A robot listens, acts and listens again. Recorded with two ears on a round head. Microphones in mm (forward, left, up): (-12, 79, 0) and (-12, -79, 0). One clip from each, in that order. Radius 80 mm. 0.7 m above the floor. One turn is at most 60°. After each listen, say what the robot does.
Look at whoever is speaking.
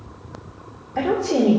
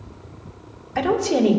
Turn 60° right.
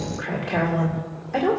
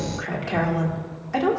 Turn 45° right.
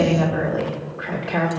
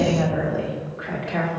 Found it: a woman speaking, straight ahead, 2 to 4 m away.